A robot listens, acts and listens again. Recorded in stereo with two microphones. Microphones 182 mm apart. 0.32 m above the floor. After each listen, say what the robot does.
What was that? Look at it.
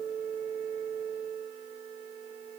Keep listening.
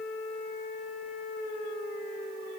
Keep listening.
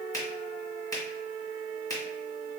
Turn 20° left.
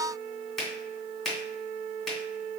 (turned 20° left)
Facing the finger snap.